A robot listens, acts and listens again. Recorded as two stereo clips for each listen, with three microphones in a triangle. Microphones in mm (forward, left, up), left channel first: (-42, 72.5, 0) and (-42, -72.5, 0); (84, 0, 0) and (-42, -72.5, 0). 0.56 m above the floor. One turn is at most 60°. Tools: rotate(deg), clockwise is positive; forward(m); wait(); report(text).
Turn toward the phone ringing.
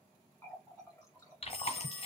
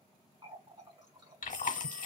rotate(60)
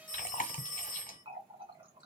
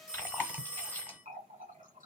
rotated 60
rotate(60)
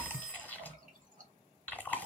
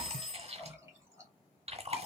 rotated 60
report("Facing the phone ringing, under 1 m away.")